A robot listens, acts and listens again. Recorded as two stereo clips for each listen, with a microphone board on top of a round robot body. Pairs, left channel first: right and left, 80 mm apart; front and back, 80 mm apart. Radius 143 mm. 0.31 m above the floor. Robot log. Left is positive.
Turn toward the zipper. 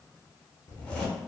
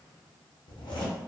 note: The zipper: 20° right.
cmd yaw -20
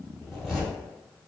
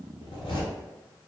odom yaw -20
end: Found it: a zipper, straight ahead, under 1 m away.